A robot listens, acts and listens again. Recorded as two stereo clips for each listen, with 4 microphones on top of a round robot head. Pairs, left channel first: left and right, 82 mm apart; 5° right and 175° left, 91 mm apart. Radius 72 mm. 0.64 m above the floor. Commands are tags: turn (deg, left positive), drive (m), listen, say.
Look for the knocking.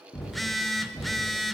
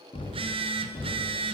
<turn deg="20"/>
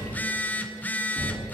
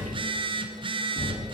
<say>Facing the knocking, over 4 m away.</say>